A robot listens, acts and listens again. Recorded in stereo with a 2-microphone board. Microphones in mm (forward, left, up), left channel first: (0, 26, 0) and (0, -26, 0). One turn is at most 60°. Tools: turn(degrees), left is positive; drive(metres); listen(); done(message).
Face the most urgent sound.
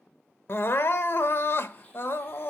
turn(degrees=50)
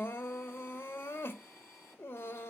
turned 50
turn(degrees=60)
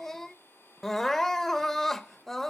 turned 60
turn(degrees=10)
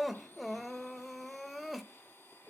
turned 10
done("Facing the crying, under 1 m away.")